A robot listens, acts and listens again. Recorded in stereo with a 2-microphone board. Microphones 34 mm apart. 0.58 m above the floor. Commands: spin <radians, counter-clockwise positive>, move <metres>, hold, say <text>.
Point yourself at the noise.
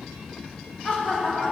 spin 0.79
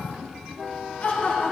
spin 0.87
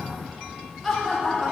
say Facing the laughter, 2 to 4 m away.